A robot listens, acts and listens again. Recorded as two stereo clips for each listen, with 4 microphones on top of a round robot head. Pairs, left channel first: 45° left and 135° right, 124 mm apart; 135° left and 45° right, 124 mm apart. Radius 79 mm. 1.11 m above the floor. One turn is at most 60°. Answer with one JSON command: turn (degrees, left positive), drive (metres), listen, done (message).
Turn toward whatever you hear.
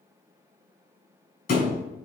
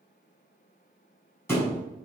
{"turn": 60}
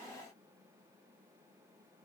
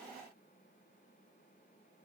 {"done": "I heard a thud from this way, but can't make it out now."}